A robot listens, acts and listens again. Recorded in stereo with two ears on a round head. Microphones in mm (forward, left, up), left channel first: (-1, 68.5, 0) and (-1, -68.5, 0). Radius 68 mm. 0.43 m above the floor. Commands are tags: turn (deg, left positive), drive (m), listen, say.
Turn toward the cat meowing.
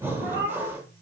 <turn deg="-60"/>
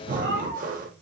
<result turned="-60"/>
<turn deg="-70"/>
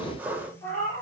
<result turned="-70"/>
<turn deg="10"/>
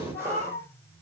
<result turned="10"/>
<say>Facing the cat meowing.</say>